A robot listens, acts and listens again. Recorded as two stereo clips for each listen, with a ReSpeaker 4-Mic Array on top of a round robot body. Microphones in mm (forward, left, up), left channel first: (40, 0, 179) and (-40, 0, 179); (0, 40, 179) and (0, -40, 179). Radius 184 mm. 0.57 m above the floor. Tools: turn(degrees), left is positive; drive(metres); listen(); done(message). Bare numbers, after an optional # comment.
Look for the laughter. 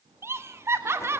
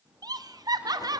# The laughter: 125° right.
turn(-125)
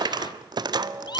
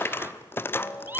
listen()
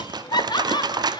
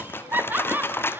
# The laughter is now 25° right.
turn(-25)
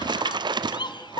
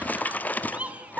# The laughter is now 15° right.
turn(-15)
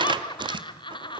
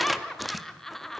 done("Found it: laughter, straight ahead.")